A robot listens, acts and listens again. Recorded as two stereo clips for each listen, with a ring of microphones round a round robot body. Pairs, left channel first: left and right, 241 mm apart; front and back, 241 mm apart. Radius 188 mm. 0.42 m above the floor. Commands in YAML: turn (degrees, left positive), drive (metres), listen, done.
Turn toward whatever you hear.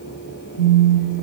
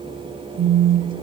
turn: 130
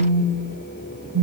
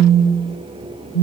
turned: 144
turn: -10
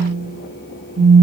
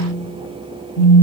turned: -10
done: "Found it: a phone buzzing, straight ahead, under 1 m away."